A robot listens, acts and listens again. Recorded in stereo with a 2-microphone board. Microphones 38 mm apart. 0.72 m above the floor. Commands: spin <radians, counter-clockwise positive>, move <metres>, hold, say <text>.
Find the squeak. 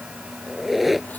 spin -0.52
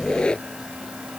spin 0.44
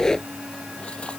spin 0.26
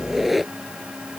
say Facing the squeak.